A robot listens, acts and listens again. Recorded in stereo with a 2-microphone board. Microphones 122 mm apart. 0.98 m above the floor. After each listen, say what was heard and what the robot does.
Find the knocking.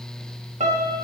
Keep listening.
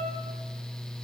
Keep listening.
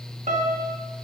I can't make out knocking, only a piano.